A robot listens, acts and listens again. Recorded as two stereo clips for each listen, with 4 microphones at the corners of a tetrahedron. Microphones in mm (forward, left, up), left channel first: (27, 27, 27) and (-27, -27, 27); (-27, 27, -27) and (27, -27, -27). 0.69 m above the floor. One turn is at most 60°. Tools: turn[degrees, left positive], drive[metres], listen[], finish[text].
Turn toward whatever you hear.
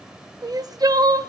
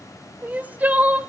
Thought: The crying: 110° right.
Action: turn[-60]
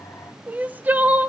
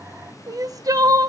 Thought: The crying is now 70° right.
Action: turn[-60]
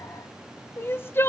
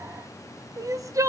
Thought: The crying is now 10° right.
Action: turn[-10]
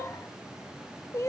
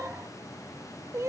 Action: finish[Facing the crying, under 1 m away.]